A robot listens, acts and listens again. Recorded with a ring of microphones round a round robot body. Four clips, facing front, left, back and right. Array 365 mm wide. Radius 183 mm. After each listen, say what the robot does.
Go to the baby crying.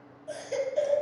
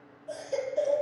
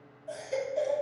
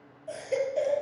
Turn 55° right.
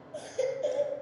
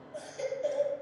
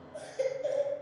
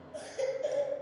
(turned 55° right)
Turn 20° right.
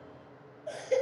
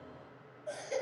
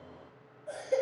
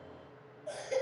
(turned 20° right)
Drive 1.0 m forward.
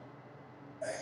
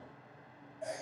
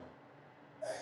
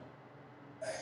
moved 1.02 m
Turn 10° right.
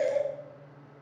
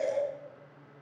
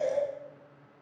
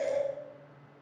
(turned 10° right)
Drive 1.0 m forward.
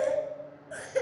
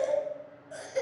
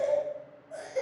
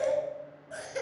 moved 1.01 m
Turn 10° right.
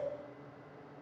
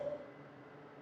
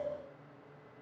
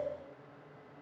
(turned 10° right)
Keep listening.
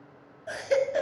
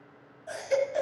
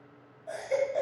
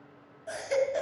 Drive 1.0 m forward.
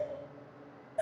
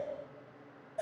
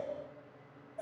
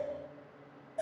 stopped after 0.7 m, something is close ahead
I am next to the baby crying.